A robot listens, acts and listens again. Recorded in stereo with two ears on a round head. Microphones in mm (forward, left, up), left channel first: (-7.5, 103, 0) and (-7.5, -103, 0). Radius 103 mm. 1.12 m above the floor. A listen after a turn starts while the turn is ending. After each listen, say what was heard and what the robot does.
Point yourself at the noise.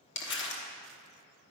The crumpling: about 50° left or 130° left. Turn 50° left.
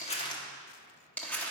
Found it: crumpling, straight ahead.